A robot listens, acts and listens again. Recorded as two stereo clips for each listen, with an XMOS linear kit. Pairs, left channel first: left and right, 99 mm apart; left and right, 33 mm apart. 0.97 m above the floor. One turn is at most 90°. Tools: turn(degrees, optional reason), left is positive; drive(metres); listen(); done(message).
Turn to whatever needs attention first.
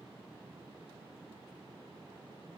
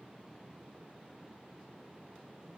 listen()
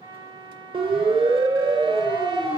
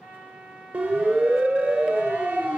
turn(degrees=-60, reason="The siren: about 60° right or 120° right.")
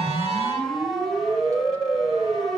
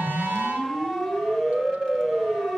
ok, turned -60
done("Facing the siren, 2 to 4 m away.")